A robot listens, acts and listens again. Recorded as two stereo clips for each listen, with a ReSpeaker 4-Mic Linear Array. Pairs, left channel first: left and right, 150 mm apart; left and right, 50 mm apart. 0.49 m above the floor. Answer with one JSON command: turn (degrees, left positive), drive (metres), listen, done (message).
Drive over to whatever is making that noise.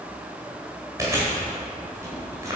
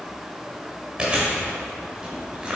{"turn": -20}
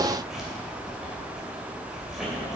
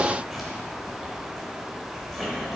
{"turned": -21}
{"drive": 1.0}
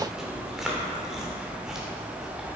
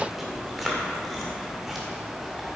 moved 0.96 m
{"drive": 1.0}
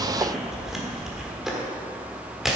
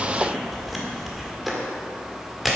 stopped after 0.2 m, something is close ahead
{"done": "Arrived at the chewing, straight ahead."}